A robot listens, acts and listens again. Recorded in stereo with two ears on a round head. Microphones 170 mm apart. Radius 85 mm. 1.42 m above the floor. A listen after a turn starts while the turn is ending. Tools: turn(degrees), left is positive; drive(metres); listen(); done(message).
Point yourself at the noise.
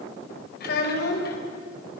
turn(degrees=55)
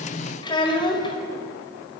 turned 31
turn(degrees=25)
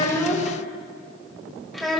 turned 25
done("Facing the child speaking, over 4 m away.")